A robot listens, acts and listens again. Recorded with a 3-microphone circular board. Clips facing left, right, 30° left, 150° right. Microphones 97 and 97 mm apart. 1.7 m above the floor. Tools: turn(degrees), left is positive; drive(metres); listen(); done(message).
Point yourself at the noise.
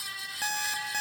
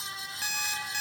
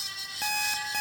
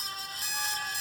turn(degrees=45)
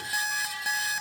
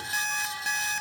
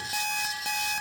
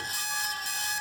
turn(degrees=10)
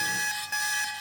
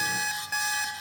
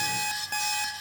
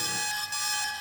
done("Found it: an alarm clock, straight ahead.")